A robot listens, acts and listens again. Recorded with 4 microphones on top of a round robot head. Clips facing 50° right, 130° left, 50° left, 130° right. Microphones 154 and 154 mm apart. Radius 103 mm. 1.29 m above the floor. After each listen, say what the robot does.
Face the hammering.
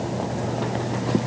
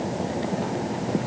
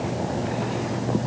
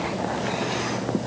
Keep listening.
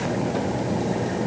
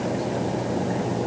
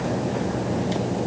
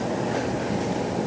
Keep listening.
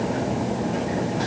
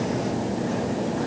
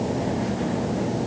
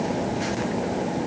I can't make out hammering to turn to.